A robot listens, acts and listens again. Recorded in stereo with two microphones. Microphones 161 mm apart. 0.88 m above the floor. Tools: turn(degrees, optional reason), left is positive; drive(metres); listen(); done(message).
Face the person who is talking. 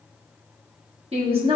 turn(degrees=-35, reason="The woman speaking: about 35° right or 145° right.")
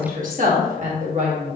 turn(degrees=-40, reason="The woman speaking: about 40° right or 140° right.")
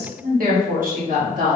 turn(degrees=-130, reason="So it is at 130° right.")
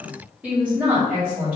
turn(degrees=-10, reason="The woman speaking is now 10° right.")
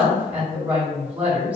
turn(degrees=-10, reason="The woman speaking is now 10° right.")
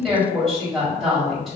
done("Facing the woman speaking, 1 to 2 m away.")